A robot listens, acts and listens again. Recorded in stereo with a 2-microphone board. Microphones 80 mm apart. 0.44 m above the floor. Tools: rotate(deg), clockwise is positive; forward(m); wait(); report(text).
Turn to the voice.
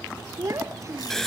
rotate(40)
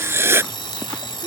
wait()
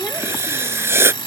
wait()
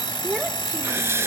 report("I heard a child speaking, but can't make it out now. It was about straight ahead or 100° right.")